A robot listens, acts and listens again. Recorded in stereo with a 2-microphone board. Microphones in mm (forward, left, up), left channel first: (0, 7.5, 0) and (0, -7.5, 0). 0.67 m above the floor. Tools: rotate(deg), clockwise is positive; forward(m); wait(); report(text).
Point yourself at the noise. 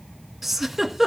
rotate(30)
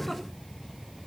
wait()
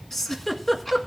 rotate(-25)
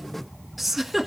report("Found it: a giggle, straight ahead.")